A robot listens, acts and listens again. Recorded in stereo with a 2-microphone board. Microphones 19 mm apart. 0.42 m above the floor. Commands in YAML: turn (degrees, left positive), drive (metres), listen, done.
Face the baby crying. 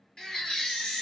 turn: 30
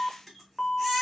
listen: true
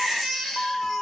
done: "Found it: a baby crying, straight ahead."